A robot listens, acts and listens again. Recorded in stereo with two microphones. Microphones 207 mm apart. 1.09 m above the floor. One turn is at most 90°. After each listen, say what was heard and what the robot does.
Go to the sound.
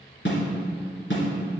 The snare drum: about 65° left or 115° left. Turn 65° left.
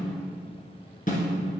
So it is at 45° left. Turn 45° left.
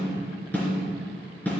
The snare drum is now 10° left. Turn 10° left.
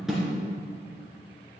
Drive 1.0 m forward.
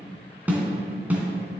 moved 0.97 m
The snare drum is now 10° right. Turn 10° right.
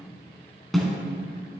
Drive 1.0 m forward.
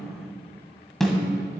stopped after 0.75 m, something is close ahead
Arrived at the snare drum, straight ahead.